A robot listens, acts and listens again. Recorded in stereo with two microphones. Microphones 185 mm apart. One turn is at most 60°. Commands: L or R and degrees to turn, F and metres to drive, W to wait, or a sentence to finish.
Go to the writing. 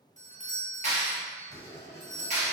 L60
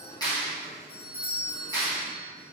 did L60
F1.0
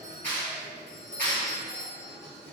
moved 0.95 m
L15
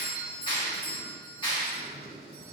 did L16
F1.0
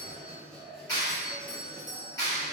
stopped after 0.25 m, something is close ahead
Arrived at the writing, straight ahead.